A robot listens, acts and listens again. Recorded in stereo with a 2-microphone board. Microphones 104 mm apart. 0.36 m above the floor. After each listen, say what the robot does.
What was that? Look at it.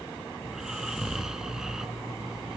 Turn 30° right.
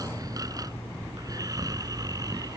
Turn 145° right.
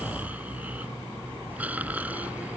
Turn 15° right.
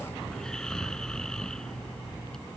Facing the snoring.